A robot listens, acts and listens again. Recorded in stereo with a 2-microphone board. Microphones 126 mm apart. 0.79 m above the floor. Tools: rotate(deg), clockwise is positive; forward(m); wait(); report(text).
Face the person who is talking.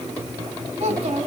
rotate(55)
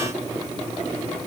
wait()
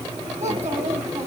rotate(70)
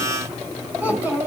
rotate(15)
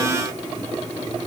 wait()
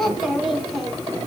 report("Found it: a child speaking, straight ahead.")